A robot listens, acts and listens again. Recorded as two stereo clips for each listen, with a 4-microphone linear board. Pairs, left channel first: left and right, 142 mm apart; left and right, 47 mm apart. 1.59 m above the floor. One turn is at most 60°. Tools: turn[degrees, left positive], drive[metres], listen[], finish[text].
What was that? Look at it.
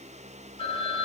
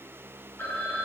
Thought: The phone ringing: about 40° left or 140° left.
Action: turn[40]
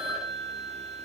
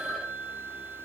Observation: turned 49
Action: finish[Found it: a phone ringing, straight ahead, 2 to 4 m away.]